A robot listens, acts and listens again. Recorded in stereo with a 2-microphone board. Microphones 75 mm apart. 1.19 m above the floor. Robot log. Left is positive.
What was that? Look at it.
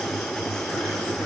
cmd idle
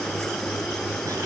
cmd idle
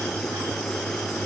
end: I can't make out anything to turn to.